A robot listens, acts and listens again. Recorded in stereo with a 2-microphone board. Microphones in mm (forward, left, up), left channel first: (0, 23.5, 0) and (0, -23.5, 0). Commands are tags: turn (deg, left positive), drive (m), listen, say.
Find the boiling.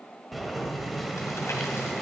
<turn deg="30"/>
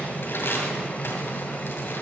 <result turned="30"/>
<turn deg="145"/>
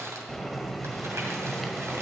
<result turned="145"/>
<say>Found it: boiling, straight ahead.</say>